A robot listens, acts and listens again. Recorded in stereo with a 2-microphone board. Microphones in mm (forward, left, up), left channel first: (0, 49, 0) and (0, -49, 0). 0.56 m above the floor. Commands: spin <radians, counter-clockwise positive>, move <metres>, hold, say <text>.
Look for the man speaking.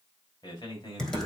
spin 0.87
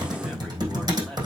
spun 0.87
hold
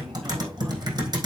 hold
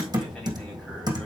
say I heard a man speaking, but can't make it out now. It was about straight ahead or 80° left.